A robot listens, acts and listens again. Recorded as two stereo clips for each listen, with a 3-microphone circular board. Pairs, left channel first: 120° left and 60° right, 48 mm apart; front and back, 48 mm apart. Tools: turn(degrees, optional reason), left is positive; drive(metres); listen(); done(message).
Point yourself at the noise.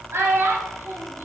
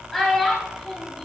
turn(degrees=-80, reason="The child speaking: 80° right.")
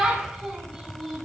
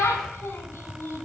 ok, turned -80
turn(degrees=30, reason="The child speaking is now 30° left.")
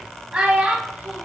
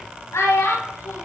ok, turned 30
turn(degrees=15, reason="The child speaking is now 15° left.")
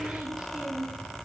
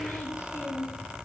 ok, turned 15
turn(degrees=10, reason="The child speaking is now 10° left.")
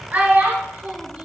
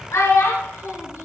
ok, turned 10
done("Facing the child speaking, 2 to 4 m away.")